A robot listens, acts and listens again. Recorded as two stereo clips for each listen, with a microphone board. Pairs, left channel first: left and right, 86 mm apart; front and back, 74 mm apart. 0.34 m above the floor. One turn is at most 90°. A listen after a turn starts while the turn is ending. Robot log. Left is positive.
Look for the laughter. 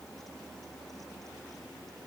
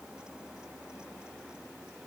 cmd idle
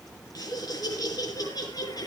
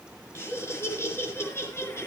note: The laughter: 50° left.
cmd yaw +50
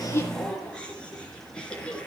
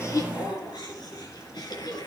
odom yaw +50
note: The laughter is now 10° left.
cmd yaw +10
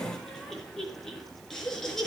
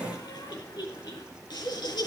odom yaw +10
end: Facing the laughter.